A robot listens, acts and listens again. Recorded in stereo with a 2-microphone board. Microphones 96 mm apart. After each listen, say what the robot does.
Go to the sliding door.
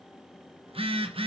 Keep listening.
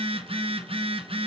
Keep listening.
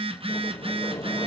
Turn 40° left.
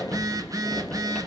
Drive 1.0 m forward.
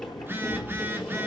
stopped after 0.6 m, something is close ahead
Something is in my way. I am facing the sliding door but have not reached it.